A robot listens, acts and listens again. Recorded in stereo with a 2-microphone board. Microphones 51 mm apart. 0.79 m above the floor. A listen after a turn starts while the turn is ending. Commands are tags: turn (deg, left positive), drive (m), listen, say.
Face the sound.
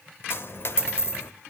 <turn deg="55"/>
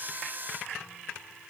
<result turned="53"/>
<listen/>
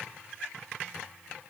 <say>I heard a dropped coin, but can't make it out now. It was about straight ahead or 70° left.</say>